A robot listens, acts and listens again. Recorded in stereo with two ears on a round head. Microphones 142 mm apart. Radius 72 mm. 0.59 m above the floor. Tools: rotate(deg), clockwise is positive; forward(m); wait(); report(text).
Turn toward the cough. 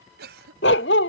rotate(75)
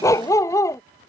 wait()
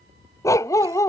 wait()
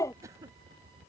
rotate(20)
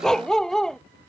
wait()
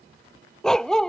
wait()
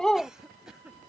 report("Facing the cough.")